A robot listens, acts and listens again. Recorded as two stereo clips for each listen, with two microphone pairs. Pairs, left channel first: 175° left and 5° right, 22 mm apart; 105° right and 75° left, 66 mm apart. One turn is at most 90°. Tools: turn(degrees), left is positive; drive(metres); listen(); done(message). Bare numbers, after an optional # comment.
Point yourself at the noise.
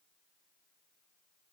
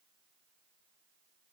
listen()
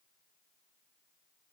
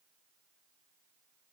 listen()
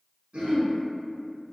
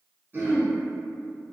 # The throat clearing: 15° left.
turn(15)
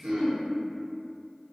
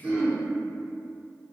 done("Found it: throat clearing, straight ahead.")